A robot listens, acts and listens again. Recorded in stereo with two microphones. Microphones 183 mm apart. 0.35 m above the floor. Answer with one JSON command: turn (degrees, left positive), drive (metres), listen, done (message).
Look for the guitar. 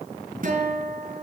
{"turn": -50}
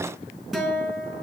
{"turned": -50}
{"done": "Facing the guitar, over 4 m away."}